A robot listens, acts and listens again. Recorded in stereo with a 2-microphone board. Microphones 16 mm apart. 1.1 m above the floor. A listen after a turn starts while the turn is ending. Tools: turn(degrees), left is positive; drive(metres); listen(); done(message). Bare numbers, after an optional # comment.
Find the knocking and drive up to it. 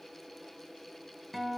listen()
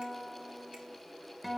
listen()
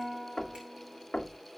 turn(90)
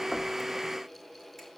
listen()
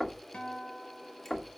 # The knocking is now 10° left.
turn(10)
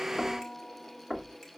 drive(1.0)
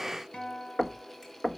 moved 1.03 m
drive(1.0)
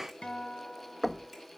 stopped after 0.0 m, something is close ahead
done("Arrived at the knocking, straight ahead.")